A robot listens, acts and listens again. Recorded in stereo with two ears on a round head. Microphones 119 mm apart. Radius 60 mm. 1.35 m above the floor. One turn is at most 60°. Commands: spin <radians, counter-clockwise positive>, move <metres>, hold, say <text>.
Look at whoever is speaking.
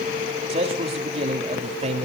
spin -0.79
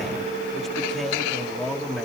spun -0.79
say Facing the man speaking, 2 to 4 m away.